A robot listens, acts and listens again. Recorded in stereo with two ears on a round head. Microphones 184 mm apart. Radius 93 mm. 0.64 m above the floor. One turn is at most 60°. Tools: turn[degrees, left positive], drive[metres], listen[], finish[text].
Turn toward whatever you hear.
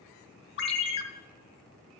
Thought: The ringtone: about 60° left or 120° left.
Action: turn[60]
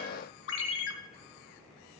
Thought: So it is at 60° left.
Action: turn[60]
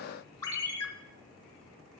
Thought: The ringtone is now 15° left.
Action: turn[15]
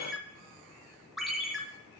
Action: finish[Facing the ringtone, 1 to 2 m away.]